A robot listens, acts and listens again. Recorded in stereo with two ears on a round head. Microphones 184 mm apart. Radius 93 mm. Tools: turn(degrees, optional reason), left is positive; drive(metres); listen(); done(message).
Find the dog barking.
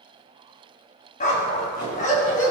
turn(degrees=40, reason="The dog barking: about 40° left or 140° left.")
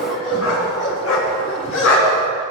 turn(degrees=95, reason="So it is at 95° left.")
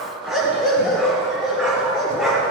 done("Found it: a dog barking, straight ahead, over 4 m away.")